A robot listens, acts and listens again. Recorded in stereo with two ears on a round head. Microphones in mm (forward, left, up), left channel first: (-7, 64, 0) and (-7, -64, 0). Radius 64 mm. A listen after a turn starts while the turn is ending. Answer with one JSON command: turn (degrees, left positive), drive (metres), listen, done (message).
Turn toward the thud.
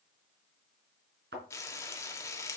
{"turn": -90}
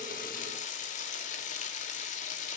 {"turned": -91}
{"done": "I heard a thud from this way, but can't make it out now."}